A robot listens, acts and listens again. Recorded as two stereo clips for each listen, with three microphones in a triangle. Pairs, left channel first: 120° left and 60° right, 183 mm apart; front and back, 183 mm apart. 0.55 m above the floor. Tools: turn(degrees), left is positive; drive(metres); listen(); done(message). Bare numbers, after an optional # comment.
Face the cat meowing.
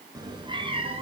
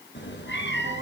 done("Facing the cat meowing, 1 to 2 m away.")